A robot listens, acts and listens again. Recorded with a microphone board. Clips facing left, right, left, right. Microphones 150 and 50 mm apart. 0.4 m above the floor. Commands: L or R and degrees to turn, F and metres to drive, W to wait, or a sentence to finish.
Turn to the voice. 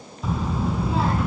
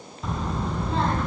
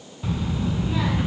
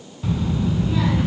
L30
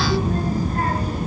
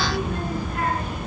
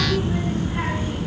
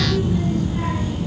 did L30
L140
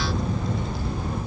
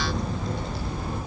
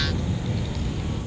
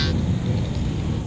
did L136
Facing the child speaking, over 4 m away.